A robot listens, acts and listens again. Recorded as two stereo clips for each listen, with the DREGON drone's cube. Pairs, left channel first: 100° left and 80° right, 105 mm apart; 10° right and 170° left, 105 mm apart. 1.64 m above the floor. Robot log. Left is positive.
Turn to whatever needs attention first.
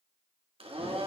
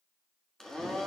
cmd idle
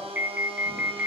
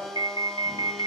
note: The alarm: 150° right.
cmd yaw -150
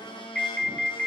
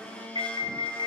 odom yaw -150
note: The alarm is now 15° left.
cmd yaw +15
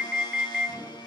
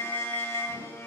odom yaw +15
end: Facing the alarm.